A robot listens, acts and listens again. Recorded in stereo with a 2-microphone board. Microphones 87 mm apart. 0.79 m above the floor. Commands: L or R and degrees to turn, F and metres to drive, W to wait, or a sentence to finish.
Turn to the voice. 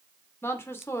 L30
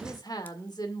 L120
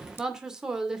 R10
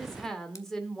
Found it: a woman speaking, straight ahead, 2 to 4 m away.